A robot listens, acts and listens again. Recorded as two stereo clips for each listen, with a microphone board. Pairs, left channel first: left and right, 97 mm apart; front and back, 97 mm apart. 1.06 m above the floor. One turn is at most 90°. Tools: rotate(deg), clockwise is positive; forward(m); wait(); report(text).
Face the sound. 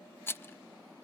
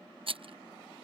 rotate(-90)
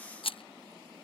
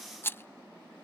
rotate(-65)
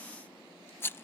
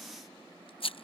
rotate(-25)
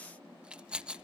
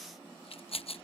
rotate(10)
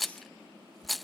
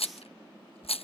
report("Facing the rattle.")